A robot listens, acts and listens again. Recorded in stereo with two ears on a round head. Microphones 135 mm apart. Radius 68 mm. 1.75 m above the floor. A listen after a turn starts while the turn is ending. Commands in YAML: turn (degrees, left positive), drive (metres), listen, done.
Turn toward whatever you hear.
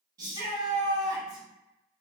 turn: -25
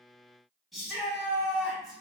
done: "Facing the shout."